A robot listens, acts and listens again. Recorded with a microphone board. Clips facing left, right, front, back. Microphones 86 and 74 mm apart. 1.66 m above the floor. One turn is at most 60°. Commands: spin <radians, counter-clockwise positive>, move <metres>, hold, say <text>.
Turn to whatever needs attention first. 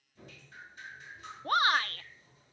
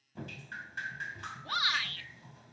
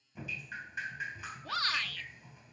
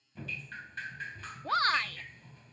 spin 1.05
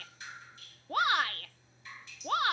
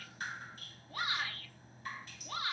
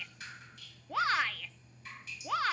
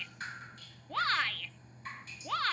spin 1.05
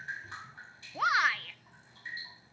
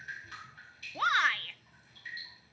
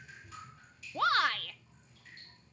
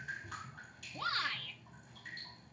say Found it: a shout, straight ahead.